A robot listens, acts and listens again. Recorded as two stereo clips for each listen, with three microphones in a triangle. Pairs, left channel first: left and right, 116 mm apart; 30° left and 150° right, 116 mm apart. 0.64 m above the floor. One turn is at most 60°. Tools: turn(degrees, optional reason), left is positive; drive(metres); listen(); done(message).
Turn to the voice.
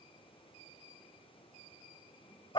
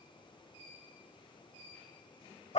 listen()
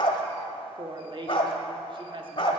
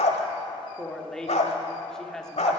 turn(degrees=-55, reason="The woman speaking: 55° right.")
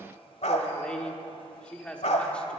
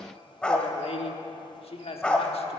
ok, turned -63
turn(degrees=10, reason="The woman speaking is now 10° left.")
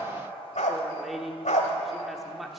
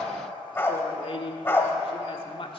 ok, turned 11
done("Facing the woman speaking.")